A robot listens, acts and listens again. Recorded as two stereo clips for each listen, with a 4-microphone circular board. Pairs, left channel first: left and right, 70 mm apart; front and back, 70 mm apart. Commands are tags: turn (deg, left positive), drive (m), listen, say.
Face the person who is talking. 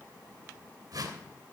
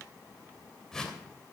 <listen/>
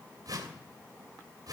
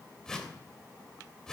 <listen/>
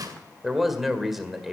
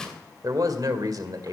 <turn deg="-175"/>
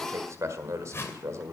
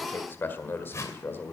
<turn deg="-55"/>
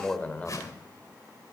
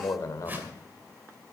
<turn deg="25"/>
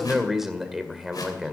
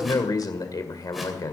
<say>Found it: a man speaking, straight ahead.</say>